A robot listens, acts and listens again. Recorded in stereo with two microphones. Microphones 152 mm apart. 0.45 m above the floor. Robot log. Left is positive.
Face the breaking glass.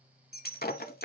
cmd yaw +90
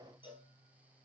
end: Facing where the breaking glass came from. I can't hear it now.